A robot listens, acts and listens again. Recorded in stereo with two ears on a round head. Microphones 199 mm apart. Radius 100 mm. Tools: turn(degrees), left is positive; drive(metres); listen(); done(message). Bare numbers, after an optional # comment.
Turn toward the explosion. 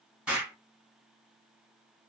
turn(-30)
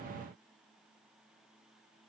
listen()
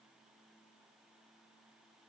done("I heard an explosion, but can't make it out now. It was about 25° left or 145° right.")